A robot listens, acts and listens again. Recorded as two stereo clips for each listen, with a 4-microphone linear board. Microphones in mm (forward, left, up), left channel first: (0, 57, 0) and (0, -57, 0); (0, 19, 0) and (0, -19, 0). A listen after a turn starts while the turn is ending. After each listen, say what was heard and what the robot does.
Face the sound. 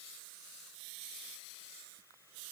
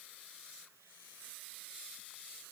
Keep listening.
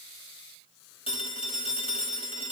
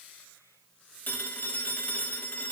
The phone ringing: about 55° left or 125° left. Turn 55° left.
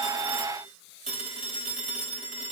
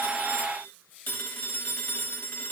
So it is at 70° left. Turn 70° left.
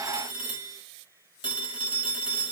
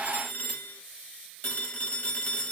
The phone ringing is now 50° left. Turn 50° left.
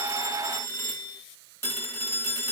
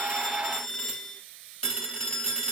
The phone ringing is now 20° left. Turn 20° left.
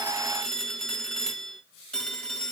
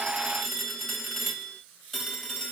Facing the phone ringing.